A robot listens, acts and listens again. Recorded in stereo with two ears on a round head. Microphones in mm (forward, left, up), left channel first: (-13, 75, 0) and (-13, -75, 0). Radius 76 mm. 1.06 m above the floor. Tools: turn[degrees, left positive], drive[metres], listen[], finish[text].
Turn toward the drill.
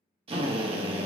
Thought: The drill: about 35° right or 145° right.
Action: turn[-35]
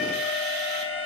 Action: listen[]
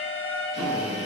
Thought: So it is at 105° right.
Action: turn[-105]
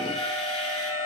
Action: listen[]
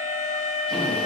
Action: listen[]
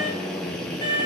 Action: finish[Facing the drill, under 1 m away.]